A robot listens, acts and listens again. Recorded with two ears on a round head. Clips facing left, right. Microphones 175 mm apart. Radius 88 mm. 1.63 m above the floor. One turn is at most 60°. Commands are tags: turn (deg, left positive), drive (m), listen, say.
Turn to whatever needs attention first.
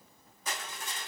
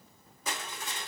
<listen/>
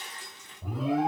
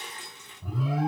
<turn deg="50"/>
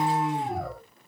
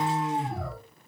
<turn deg="60"/>
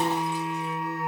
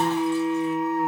<turn deg="45"/>
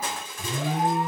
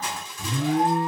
<turn deg="10"/>
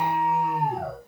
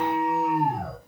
<say>Found it: an alarm, straight ahead.</say>